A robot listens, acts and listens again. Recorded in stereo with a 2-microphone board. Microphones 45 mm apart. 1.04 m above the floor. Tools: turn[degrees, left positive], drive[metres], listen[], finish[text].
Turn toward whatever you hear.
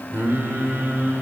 Thought: The singing: about 50° right or 130° right.
Action: turn[-50]
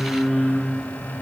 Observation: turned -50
Action: finish[Found it: singing, straight ahead, 2 to 4 m away.]